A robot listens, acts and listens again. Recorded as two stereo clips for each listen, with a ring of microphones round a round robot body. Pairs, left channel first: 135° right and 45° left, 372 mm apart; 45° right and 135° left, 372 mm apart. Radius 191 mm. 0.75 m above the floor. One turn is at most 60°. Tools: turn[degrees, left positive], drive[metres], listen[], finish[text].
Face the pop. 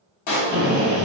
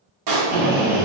Thought: The pop: 175° left.
Action: turn[60]
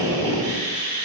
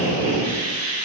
Thought: Nothing new. It was at 115° left.
Action: turn[60]
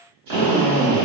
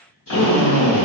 Thought: Nothing new. It was at 55° left.
Action: turn[55]
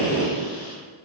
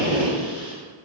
Action: finish[Facing where the pop came from. I can't hear it now.]